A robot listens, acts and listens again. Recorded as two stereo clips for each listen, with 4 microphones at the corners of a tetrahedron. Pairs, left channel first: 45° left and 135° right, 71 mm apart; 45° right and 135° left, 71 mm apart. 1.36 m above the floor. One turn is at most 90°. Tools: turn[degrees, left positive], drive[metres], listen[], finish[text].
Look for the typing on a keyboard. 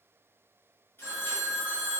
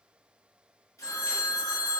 Action: listen[]
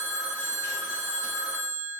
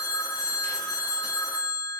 Action: listen[]
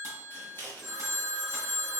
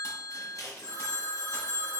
Action: finish[I can't make out typing on a keyboard to turn to.]